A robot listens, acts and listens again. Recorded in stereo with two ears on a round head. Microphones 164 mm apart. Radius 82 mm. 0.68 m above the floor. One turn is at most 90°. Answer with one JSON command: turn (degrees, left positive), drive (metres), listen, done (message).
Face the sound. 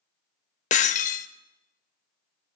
{"turn": 40}
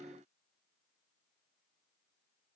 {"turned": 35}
{"listen": true}
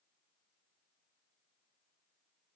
{"done": "I heard breaking glass, but can't make it out now. It was about 5° left or 105° left."}